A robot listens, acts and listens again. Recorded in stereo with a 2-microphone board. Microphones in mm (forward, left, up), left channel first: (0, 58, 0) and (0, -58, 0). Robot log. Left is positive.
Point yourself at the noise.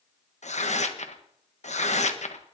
cmd yaw +90
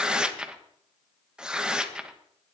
end: Found it: tearing paper, straight ahead.